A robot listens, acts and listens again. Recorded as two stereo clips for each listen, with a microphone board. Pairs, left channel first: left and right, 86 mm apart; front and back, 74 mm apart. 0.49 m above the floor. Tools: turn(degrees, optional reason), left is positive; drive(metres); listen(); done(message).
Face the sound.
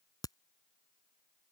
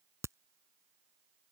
turn(degrees=135, reason="The crack: 135° left.")
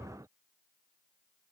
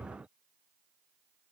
done("I heard a crack from this way, but can't make it out now.")